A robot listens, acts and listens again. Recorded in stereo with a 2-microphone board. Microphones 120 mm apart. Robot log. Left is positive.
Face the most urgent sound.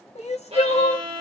note: The crying: about 65° left or 115° left.
cmd yaw +65
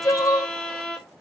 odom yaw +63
note: So it is at 30° left.
cmd yaw +30
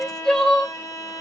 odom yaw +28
end: Facing the crying, under 1 m away.